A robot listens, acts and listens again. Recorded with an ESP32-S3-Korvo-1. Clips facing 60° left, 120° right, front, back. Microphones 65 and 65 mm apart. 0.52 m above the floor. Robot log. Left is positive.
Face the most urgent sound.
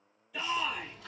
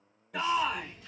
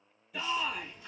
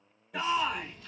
note: The shout: 145° right.
cmd yaw -145
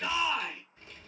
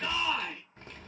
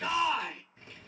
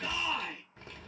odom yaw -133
note: The shout is now 15° right.
cmd yaw -15
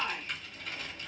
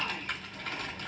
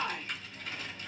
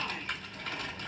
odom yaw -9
end: Facing the shout.